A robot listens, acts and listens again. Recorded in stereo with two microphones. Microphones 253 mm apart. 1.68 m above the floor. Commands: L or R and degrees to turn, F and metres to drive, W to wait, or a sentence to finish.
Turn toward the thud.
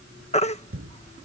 R55
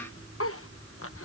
W
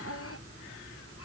I heard a thud, but can't make it out now. It was about straight ahead or 70° right.